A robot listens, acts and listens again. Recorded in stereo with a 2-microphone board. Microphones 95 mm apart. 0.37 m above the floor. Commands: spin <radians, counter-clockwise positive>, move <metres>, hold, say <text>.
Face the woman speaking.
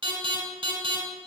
hold
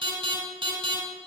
hold
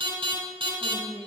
spin -0.87
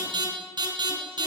hold
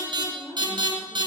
spin -0.35
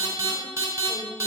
hold
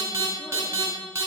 hold
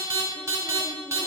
say I heard a woman speaking from this way, but can't make it out now.